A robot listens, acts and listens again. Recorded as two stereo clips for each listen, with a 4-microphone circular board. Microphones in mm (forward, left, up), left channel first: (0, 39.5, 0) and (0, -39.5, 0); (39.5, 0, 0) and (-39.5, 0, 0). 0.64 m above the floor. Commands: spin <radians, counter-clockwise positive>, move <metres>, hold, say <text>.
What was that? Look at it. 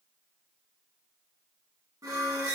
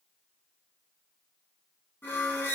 spin -0.96
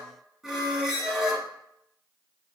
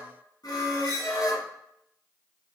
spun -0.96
say Facing the squeak, under 1 m away.